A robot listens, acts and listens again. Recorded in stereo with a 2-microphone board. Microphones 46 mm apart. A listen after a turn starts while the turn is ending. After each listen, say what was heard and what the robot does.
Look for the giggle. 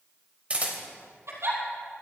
The giggle: about 70° right or 110° right. Turn 70° right.
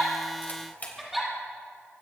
Found it: a giggle, straight ahead.